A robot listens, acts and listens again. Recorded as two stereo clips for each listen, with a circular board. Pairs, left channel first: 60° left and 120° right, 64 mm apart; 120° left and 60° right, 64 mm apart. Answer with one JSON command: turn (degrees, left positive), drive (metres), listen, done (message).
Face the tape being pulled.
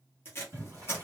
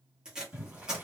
{"turn": 15}
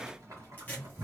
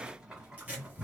{"listen": true}
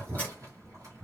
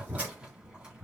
{"listen": true}
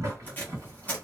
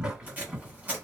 {"done": "Found it: tape being pulled, straight ahead, 1 to 2 m away."}